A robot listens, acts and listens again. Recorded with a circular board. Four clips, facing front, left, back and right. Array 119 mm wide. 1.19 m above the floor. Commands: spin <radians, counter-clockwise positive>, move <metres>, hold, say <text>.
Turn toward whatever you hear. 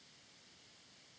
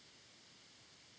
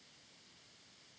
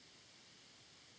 hold
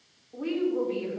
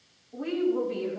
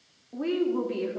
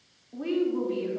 spin -2.97
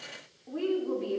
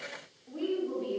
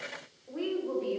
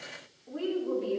say Found it: a woman speaking, straight ahead, over 4 m away.